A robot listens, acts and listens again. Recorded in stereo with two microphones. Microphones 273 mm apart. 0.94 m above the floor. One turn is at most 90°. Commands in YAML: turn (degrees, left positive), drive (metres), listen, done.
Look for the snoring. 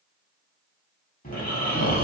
turn: 30
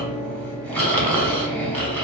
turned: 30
done: "Found it: snoring, straight ahead, under 1 m away."